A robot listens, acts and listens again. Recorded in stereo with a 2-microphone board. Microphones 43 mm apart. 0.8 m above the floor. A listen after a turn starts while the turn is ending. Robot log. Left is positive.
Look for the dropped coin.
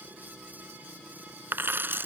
note: The dropped coin: about 55° right or 125° right.
cmd yaw -55
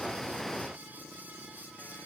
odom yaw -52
cmd idle
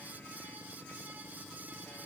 end: I heard a dropped coin, but can't make it out now. It was about 5° right or 75° right.